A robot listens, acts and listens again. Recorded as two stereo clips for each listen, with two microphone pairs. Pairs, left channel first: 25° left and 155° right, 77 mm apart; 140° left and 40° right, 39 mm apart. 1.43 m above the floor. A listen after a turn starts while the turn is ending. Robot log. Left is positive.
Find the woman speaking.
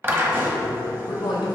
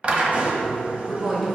note: The woman speaking: 40° left.
cmd yaw +40
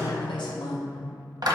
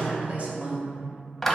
note: The woman speaking is now 20° left.
cmd yaw +20
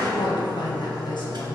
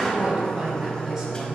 note: The woman speaking is now 25° left.
cmd yaw +25
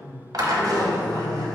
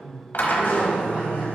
cmd idle
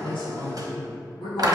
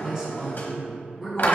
note: The woman speaking is now 30° left.
cmd yaw +30
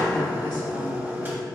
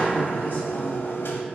cmd idle
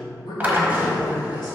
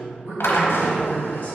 end: Found it: a woman speaking, straight ahead, 1 to 2 m away.